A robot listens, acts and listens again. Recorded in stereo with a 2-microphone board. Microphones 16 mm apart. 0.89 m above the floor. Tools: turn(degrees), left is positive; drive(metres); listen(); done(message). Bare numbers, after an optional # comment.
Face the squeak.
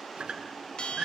# The squeak: about 75° right or 105° right.
turn(-75)
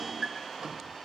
# So it is at 30° right.
turn(-30)
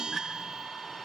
listen()
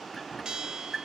# The squeak is now 10° left.
turn(10)
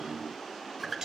done("Found it: a squeak, straight ahead, over 4 m away.")